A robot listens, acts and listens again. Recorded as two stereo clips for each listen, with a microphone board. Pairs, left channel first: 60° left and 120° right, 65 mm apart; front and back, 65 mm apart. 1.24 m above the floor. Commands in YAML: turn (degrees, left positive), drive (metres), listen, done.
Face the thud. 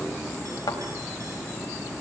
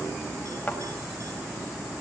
turn: 70
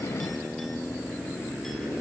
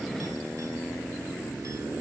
done: "I heard a thud from this way, but can't make it out now."